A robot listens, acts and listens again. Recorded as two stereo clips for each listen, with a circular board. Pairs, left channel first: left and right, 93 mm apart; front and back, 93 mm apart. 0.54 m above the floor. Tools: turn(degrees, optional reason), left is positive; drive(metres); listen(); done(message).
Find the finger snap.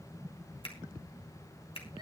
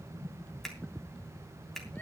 turn(degrees=85, reason="The finger snap: 85° left.")
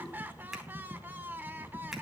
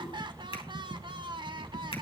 done("Facing the finger snap.")